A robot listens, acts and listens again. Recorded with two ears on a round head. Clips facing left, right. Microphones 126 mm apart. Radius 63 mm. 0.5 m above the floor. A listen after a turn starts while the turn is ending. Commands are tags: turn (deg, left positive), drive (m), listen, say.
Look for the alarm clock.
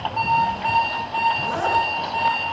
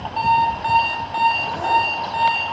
<turn deg="-35"/>
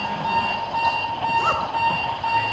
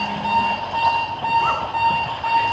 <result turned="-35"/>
<say>Facing the alarm clock, 1 to 2 m away.</say>